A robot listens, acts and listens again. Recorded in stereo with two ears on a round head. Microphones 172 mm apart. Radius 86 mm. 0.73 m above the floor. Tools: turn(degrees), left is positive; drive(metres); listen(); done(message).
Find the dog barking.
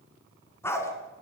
turn(degrees=30)
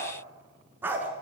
turn(degrees=-10)
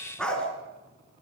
done("Facing the dog barking, over 4 m away.")